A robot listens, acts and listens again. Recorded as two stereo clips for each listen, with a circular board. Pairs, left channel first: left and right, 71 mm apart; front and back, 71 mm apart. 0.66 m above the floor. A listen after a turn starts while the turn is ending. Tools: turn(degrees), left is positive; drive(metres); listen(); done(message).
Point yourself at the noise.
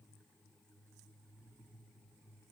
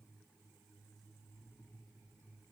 listen()
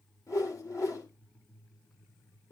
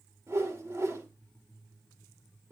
turn(degrees=130)
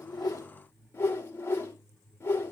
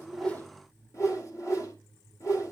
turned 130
turn(degrees=35)
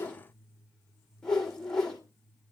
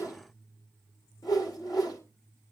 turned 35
turn(degrees=10)
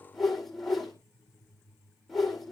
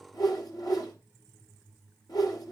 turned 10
done("Facing the whoosh, 2 to 4 m away.")